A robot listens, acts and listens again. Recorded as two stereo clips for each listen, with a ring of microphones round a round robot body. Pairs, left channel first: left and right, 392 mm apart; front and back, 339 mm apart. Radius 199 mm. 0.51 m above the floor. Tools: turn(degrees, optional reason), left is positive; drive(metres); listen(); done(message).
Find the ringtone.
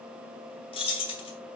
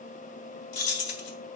listen()
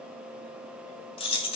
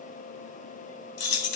listen()
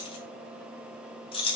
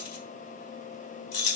done("I can't make out a ringtone, only keys jangling.")